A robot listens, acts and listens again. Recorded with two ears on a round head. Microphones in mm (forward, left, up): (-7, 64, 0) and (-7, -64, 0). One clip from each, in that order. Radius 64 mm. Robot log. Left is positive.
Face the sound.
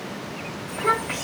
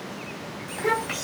cmd yaw -30
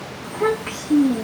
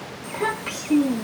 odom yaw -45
note: So it is at 120° right.
cmd yaw -120
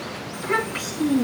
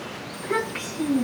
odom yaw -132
note: The child speaking is now 20° left.
cmd yaw +20
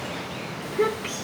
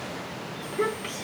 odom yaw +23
end: Found it: a child speaking, straight ahead, over 4 m away.